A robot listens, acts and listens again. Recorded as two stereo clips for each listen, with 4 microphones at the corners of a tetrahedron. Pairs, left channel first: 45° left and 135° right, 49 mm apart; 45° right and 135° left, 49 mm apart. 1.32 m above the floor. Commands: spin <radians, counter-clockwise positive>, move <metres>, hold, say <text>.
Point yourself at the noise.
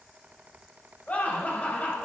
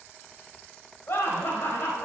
spin -0.26
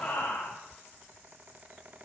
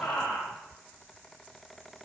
say Facing the laughter.